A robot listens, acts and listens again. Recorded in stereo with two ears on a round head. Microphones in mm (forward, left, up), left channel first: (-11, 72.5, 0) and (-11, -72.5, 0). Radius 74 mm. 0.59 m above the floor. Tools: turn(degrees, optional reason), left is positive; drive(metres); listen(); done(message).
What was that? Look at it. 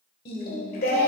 turn(degrees=65, reason="The singing: about 65° left or 115° left.")
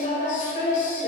turn(degrees=50, reason="So it is at 50° left.")
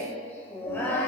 turn(degrees=15, reason="The singing is now 15° left.")
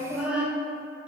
done("Facing the singing.")